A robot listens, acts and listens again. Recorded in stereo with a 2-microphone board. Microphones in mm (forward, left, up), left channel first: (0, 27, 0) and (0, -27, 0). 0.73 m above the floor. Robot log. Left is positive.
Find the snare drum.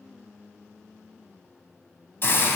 cmd idle
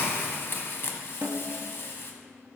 note: The snare drum: about 60° right or 120° right.
cmd yaw -60
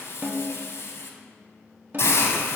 note: So it is at 40° right.
cmd yaw -40
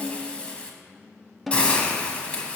end: Facing the snare drum, under 1 m away.